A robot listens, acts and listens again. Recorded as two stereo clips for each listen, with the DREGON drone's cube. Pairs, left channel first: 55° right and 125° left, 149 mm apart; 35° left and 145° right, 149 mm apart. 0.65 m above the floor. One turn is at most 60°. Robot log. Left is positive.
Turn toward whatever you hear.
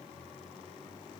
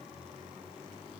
cmd idle
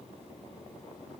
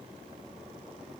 cmd idle
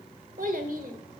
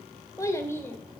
note: The child speaking: 110° left.
cmd yaw +60
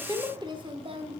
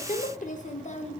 note: The child speaking is now 75° left.
cmd yaw +60
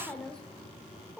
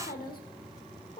note: The child speaking is now 40° left.
cmd yaw +40
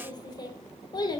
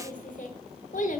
end: Found it: a child speaking, straight ahead, 1 to 2 m away.